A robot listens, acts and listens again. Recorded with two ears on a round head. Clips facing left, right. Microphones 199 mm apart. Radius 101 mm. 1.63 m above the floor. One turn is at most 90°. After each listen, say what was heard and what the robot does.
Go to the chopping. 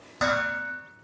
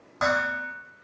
Keep listening.
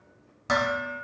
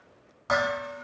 Keep listening.
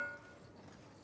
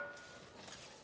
I can't make out chopping to turn to.